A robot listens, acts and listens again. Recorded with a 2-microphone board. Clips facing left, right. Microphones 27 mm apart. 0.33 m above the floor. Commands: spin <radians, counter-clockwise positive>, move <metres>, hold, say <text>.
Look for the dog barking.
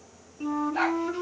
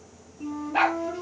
spin -1.22
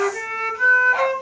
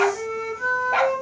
hold
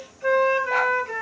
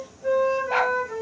hold
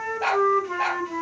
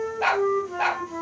say Facing the dog barking.